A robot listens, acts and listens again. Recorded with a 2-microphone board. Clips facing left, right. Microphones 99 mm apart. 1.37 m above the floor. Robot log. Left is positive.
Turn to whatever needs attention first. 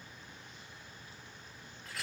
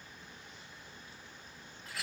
cmd idle
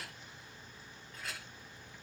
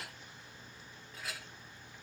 cmd idle
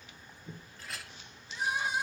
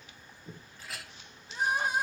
note: The crying: about 50° right or 130° right.
cmd yaw -50
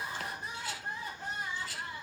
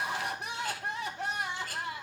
note: So it is at 80° right.
cmd yaw -80
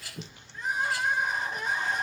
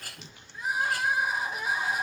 end: Found it: crying, straight ahead.